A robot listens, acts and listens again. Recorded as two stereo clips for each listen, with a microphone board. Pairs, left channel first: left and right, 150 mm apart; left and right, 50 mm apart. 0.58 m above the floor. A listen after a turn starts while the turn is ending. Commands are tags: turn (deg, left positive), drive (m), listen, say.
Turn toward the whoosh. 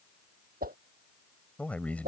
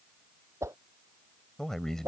<turn deg="-90"/>
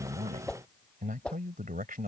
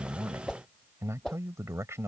<say>Found it: a whoosh, straight ahead.</say>